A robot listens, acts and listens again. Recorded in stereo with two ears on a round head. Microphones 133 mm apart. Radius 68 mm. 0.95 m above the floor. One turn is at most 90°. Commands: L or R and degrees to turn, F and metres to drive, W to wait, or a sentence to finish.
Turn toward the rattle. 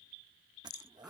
L90
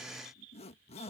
W
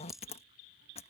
Found it: a rattle, straight ahead.